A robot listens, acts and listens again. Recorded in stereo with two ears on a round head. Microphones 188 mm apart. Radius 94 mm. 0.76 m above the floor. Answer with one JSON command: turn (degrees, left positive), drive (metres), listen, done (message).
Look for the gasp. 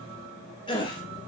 {"turn": 25}
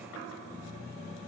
{"listen": true}
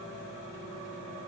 {"done": "I heard a gasp, but can't make it out now. It was about straight ahead or 130° left."}